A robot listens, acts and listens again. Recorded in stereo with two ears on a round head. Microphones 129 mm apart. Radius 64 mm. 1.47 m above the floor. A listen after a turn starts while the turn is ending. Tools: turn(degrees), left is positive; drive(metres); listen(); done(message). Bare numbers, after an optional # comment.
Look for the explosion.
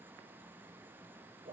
listen()
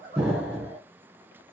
# The explosion: about 15° right or 165° right.
turn(-15)
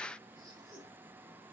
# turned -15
listen()
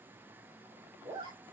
done("I heard an explosion, but can't make it out now. It was about straight ahead or 150° right.")